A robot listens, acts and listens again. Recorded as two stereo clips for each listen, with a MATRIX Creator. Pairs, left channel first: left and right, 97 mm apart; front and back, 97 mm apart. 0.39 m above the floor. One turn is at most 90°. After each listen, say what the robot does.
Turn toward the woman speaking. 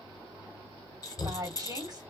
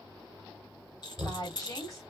Turn 50° right.
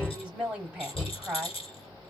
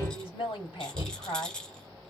Turn 10° right.
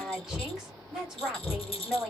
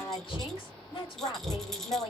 Facing the woman speaking, 2 to 4 m away.